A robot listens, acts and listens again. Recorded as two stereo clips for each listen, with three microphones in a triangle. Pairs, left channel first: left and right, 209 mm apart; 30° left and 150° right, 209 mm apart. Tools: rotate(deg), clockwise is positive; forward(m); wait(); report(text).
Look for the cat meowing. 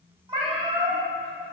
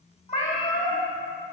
rotate(25)
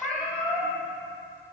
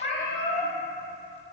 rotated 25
report("Found it: a cat meowing, straight ahead.")